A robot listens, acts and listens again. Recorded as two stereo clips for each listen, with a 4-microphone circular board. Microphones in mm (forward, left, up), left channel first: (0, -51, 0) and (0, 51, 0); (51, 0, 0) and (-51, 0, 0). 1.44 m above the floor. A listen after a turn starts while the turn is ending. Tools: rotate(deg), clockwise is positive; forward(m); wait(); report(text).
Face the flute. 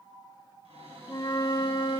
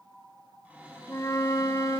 rotate(50)
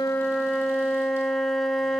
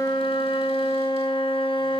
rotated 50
report("Facing the flute.")